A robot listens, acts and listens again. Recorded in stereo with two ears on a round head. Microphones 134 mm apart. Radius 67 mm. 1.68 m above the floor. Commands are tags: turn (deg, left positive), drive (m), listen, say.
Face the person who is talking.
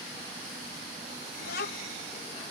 <turn deg="70"/>
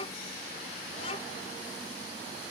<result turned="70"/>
<turn deg="40"/>
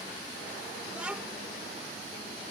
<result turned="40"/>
<say>Facing the child speaking.</say>